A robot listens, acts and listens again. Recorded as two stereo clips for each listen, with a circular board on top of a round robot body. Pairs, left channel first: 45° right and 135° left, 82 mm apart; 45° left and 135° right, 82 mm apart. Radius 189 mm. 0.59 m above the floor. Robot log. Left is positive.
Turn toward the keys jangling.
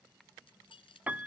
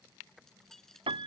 note: The keys jangling: 40° right.
cmd yaw -40
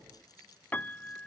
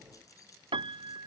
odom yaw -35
cmd idle
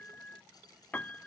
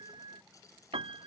cmd idle
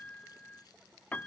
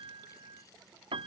end: Facing where the keys jangling came from. I can't hear it now.